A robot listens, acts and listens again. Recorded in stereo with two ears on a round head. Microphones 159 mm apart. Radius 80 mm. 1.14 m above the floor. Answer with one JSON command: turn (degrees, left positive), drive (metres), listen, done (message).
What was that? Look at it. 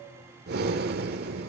{"turn": -55}
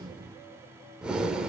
{"done": "Found it: breathing, straight ahead."}